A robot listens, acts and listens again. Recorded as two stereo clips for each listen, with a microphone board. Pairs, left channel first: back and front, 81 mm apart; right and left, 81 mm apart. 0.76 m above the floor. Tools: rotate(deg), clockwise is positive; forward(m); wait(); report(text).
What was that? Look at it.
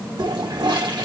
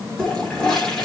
rotate(10)
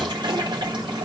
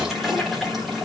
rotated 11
report("Found it: a toilet flushing, straight ahead.")